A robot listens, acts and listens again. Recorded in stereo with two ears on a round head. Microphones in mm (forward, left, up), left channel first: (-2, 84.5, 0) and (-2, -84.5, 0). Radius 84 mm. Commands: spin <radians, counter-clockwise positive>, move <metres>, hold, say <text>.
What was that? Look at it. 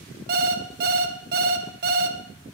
spin -0.96
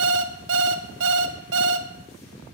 spin -1.31
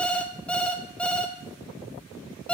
say Facing the alarm clock.